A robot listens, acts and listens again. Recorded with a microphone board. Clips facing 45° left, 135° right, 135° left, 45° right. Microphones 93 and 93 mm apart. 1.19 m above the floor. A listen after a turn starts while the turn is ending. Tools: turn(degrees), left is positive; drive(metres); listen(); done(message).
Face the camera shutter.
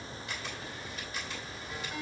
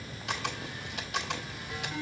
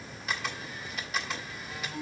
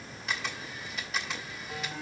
turn(degrees=-140)
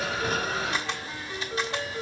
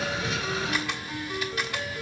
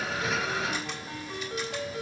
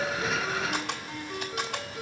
turn(degrees=-20)
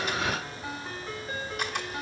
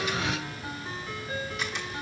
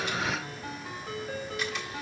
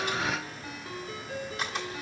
done("Found it: a camera shutter, straight ahead, 1 to 2 m away.")